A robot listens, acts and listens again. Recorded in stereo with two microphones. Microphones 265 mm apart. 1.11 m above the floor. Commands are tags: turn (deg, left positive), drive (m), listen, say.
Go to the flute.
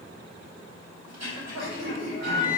<turn deg="15"/>
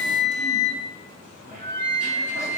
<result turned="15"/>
<drive m="1.0"/>
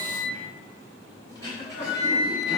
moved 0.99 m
<drive m="1.0"/>
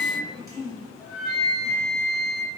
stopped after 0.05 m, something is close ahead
<say>Arrived at the flute, straight ahead.</say>